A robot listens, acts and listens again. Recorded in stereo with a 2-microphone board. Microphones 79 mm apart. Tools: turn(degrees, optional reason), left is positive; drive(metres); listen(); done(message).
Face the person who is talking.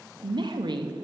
turn(degrees=-65, reason="The woman speaking: about 65° right or 115° right.")
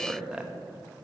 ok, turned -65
turn(degrees=-10, reason="So it is at 10° right.")
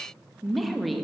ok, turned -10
done("Found it: a woman speaking, straight ahead.")